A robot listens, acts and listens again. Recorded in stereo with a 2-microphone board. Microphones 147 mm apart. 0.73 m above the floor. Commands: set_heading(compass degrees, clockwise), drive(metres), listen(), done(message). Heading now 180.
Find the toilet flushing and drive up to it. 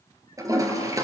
set_heading(205)
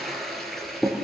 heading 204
drive(1.0)
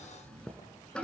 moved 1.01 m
drive(1.0)
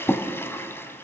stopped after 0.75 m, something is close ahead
set_heading(184)
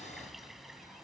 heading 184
listen()
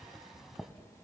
done("I am next to the toilet flushing.")